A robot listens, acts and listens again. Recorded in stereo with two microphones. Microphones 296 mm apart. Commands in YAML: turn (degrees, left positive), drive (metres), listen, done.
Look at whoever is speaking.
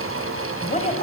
turn: 25
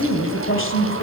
turn: 125
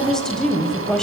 done: "Facing the woman speaking."